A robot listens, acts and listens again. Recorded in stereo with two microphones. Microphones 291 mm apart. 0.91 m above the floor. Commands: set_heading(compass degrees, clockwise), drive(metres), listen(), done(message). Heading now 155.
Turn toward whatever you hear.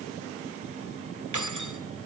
set_heading(245)
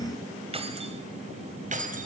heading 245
set_heading(270)
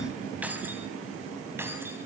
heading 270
set_heading(280)
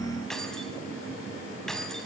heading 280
done("Found it: keys jangling, straight ahead.")